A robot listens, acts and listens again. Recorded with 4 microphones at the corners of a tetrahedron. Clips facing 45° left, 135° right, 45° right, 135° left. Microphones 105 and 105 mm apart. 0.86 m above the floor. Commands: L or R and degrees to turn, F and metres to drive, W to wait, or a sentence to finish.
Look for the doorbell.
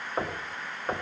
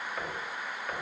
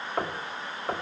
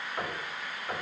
W
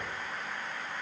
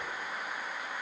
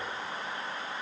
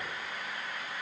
W
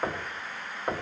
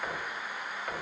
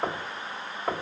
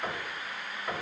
I can't make out a doorbell to turn to.